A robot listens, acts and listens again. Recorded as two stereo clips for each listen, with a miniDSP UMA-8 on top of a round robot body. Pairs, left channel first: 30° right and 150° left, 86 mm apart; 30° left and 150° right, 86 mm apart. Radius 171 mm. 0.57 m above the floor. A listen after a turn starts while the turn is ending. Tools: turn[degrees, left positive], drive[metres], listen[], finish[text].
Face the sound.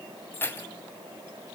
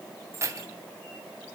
Thought: The keys jangling: 95° right.
Action: turn[-95]
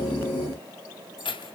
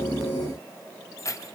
Thought: The keys jangling is now 25° right.
Action: turn[-25]
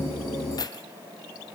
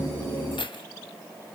Thought: The keys jangling is now 10° left.
Action: turn[10]
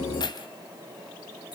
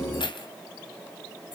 Action: finish[Found it: keys jangling, straight ahead, 2 to 4 m away.]